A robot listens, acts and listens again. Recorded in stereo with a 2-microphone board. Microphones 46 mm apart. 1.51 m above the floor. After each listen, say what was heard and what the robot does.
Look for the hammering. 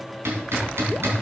The hammering: about 60° right or 120° right. Turn 60° right.
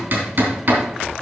So it is at 60° right. Turn 60° right.
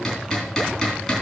The hammering is now 10° left. Turn 10° left.
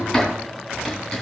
Found it: hammering, straight ahead.